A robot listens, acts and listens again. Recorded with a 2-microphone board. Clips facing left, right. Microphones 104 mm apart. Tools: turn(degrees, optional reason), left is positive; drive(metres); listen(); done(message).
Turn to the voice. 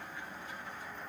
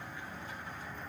listen()
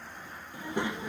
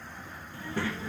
turn(degrees=20, reason="The child speaking: about 20° left or 160° left.")
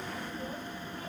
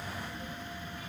turn(degrees=140, reason="So it is at 140° left.")
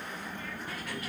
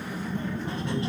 turn(degrees=-25, reason="The child speaking is now 25° right.")
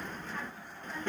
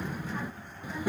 turn(degrees=-10, reason="The child speaking is now 10° right.")
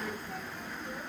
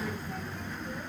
done("Facing the child speaking, 1 to 2 m away.")